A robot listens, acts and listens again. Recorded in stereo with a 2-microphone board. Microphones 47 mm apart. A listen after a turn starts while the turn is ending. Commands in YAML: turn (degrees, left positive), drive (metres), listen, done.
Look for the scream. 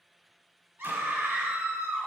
turn: -55
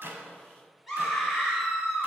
done: "Facing the scream."